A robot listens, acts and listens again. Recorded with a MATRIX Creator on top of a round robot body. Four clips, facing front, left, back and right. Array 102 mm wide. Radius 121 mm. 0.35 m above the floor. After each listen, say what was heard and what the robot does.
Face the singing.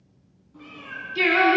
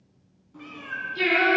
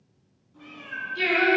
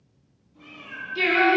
The singing: 10° right. Turn 10° right.
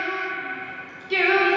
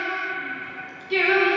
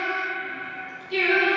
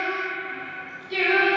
The singing is now 35° left. Turn 35° left.
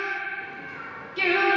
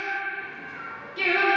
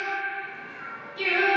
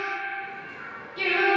The singing is now 20° left. Turn 20° left.
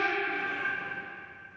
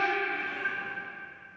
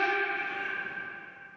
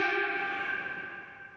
The singing is now 10° left. Turn 10° left.
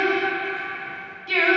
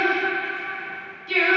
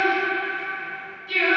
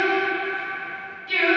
The singing is now 15° left. Turn 15° left.
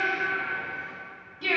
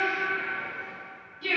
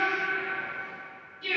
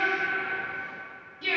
Facing the singing.